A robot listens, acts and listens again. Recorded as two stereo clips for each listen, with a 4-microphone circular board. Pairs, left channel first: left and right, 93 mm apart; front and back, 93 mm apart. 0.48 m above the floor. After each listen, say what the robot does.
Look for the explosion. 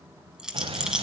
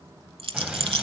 Turn 100° right.
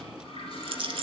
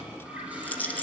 Facing where the explosion came from. I can't hear it now.